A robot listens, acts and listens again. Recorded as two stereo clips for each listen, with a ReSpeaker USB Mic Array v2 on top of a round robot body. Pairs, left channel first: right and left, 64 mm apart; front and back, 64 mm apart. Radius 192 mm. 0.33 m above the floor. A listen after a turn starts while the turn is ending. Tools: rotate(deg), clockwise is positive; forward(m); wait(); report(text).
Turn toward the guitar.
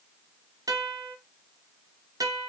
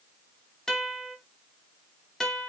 rotate(-80)
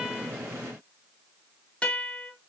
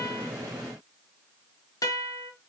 rotate(20)
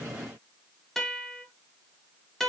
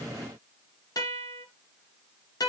report("Facing the guitar, 1 to 2 m away.")